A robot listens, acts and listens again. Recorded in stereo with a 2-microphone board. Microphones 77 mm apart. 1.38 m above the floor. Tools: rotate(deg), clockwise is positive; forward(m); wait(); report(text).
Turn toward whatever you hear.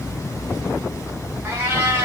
rotate(30)
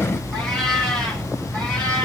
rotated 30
rotate(-15)
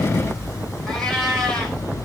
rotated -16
report("Facing the cat meowing, 2 to 4 m away.")